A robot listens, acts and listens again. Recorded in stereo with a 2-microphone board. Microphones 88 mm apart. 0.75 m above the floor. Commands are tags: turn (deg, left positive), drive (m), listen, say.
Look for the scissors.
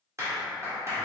<listen/>
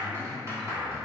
<listen/>
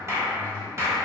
<say>I can't make out scissors, only a clap.</say>